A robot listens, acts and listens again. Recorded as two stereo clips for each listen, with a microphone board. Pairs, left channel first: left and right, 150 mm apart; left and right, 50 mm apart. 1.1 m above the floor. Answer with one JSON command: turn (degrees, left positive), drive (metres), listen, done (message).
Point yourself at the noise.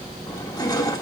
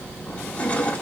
{"turn": 25}
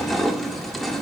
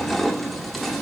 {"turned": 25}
{"done": "Facing the crushing."}